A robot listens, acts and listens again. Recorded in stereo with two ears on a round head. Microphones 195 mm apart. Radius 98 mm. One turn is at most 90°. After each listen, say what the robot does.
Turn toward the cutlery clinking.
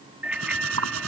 Turn 90° right.
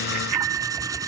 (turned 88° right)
Keep listening.
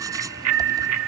Keep listening.
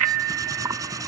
Turn 15° right.
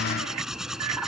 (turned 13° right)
Facing the cutlery clinking.